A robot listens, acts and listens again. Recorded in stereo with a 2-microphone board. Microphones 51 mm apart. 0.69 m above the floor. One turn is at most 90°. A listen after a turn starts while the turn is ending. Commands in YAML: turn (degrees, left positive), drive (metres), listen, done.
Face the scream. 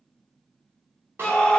turn: 20
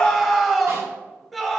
done: "Facing the scream."